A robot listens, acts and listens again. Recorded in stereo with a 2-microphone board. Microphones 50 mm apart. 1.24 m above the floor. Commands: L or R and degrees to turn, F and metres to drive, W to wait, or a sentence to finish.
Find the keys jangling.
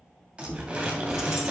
R30
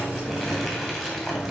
R30
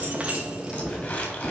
R15
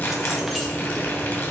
L30
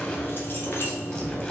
L130
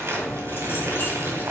L50
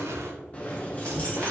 L25
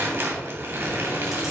W
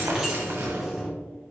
R10
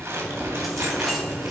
Facing the keys jangling.